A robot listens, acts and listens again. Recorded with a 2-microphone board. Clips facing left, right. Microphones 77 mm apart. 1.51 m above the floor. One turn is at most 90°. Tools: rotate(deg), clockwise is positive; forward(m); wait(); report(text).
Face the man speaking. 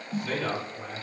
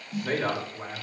rotate(45)
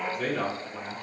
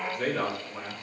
report("Facing the man speaking.")